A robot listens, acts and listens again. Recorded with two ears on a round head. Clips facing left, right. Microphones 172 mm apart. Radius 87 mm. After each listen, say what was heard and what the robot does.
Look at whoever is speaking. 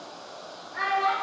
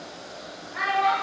The child speaking: about 55° right or 125° right. Turn 55° right.
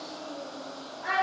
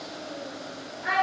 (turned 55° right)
Facing the child speaking, 1 to 2 m away.